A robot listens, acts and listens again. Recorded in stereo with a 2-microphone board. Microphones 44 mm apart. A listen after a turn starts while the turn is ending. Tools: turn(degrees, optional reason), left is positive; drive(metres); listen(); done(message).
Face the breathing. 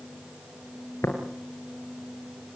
listen()
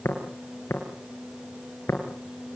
listen()
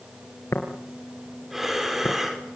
turn(degrees=-30)
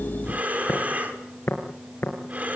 turn(degrees=-145, reason="So it is at 145° right.")
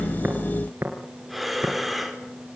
done("Facing the breathing, over 4 m away.")